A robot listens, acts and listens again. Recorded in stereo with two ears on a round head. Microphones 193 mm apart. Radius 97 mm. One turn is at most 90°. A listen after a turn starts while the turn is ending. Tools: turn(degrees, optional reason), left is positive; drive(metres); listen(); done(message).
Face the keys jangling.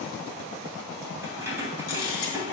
turn(degrees=-30)
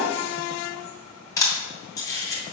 listen()
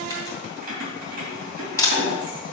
turn(degrees=-90, reason="So it is at 135° right.")
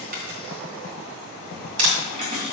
turn(degrees=-25, reason="The keys jangling is now 25° right.")
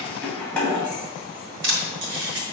done("Facing the keys jangling, 2 to 4 m away.")